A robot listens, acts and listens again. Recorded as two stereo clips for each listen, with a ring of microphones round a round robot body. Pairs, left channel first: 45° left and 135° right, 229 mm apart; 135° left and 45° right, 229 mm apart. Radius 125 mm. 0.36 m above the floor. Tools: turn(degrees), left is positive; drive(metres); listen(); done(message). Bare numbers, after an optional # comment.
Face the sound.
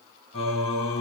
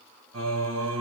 # The singing: 20° right.
turn(-20)
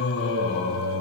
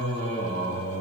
# The singing is now 10° left.
turn(10)
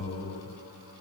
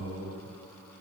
done("Facing the singing, 2 to 4 m away.")